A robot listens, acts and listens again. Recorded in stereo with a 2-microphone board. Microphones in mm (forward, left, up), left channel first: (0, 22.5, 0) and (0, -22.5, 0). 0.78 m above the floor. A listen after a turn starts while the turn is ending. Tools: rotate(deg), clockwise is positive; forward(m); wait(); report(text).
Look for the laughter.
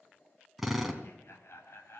rotate(-70)
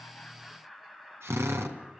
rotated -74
rotate(10)
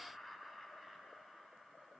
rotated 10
rotate(10)
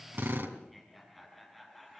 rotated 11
report("Found it: laughter, straight ahead, over 4 m away.")